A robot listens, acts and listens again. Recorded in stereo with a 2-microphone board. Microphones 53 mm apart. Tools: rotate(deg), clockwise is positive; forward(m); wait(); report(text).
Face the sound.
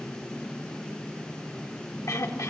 rotate(-90)
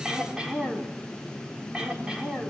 rotate(15)
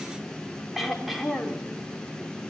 report("Facing the throat clearing.")